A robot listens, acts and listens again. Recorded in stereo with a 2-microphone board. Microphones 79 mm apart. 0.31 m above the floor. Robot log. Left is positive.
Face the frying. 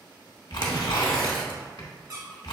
cmd idle
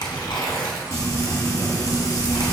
note: The frying: about 40° left or 140° left.
cmd yaw +40
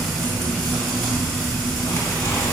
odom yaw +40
end: Found it: frying, straight ahead, 1 to 2 m away.